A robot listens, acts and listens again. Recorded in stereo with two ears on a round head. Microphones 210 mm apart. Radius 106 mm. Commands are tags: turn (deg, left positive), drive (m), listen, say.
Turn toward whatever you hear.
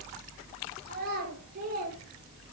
<turn deg="-40"/>
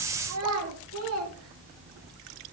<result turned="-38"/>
<turn deg="-110"/>
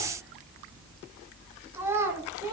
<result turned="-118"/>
<turn deg="-10"/>
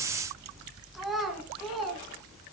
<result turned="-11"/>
<say>Facing the child speaking, 2 to 4 m away.</say>